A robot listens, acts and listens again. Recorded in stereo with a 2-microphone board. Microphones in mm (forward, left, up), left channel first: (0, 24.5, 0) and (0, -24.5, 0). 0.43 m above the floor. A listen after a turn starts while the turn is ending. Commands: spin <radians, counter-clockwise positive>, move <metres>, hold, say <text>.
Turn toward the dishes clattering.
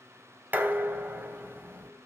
spin -0.61
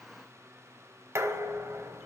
spin -1.83
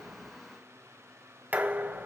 spin -0.61
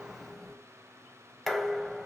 say Found it: dishes clattering, straight ahead, 1 to 2 m away.